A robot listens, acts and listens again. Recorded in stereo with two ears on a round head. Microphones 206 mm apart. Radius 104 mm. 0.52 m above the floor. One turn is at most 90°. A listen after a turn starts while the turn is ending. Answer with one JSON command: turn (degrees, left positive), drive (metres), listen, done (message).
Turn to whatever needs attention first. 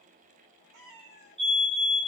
{"turn": -25}
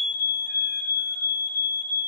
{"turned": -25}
{"turn": -90}
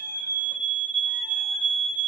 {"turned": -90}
{"turn": -35}
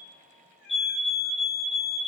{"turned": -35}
{"done": "Found it: a fire alarm, straight ahead, 2 to 4 m away."}